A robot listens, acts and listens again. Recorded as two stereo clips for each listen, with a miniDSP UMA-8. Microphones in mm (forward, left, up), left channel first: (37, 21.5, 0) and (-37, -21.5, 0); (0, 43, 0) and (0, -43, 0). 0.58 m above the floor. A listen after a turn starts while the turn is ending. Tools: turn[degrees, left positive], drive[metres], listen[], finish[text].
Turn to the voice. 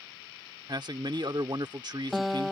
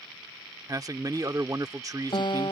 Thought: The man speaking: 130° right.
Action: turn[-130]
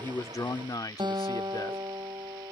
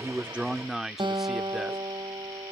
Action: finish[Facing the man speaking.]